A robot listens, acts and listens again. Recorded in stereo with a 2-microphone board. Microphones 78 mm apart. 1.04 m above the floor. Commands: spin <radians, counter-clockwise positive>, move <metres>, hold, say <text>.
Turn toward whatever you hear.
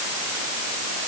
hold
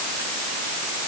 hold
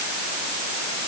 say I can't make out anything.